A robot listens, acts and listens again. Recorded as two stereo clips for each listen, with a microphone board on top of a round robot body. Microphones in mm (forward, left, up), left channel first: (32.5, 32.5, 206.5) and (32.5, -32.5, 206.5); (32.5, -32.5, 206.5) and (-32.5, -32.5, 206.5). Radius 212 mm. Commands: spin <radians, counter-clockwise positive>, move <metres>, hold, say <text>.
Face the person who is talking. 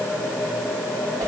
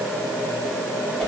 hold
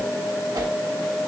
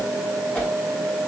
hold
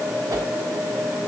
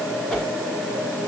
say I can't make out anyone speaking to turn to.